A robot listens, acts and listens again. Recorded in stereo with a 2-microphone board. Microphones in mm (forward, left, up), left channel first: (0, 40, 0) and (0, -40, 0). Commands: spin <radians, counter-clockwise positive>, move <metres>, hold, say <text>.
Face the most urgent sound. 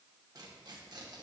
hold
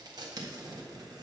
hold
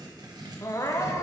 spin 0.70
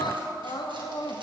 spin 1.75
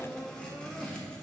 say Facing the crying.